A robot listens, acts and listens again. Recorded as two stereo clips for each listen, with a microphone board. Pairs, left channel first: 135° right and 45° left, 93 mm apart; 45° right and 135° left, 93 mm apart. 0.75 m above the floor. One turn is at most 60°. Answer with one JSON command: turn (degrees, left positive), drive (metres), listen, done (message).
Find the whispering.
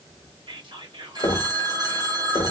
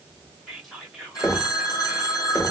{"turn": 45}
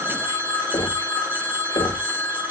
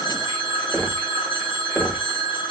{"listen": true}
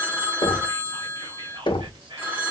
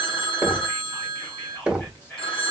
{"turn": 20}
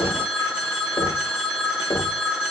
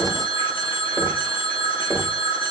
{"listen": true}
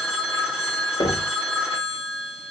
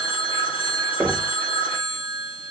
{"listen": true}
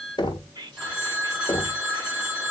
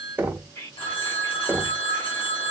{"turn": 10}
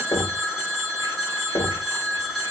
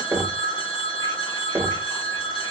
{"listen": true}
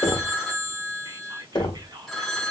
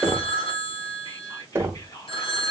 {"done": "Found it: whispering, straight ahead."}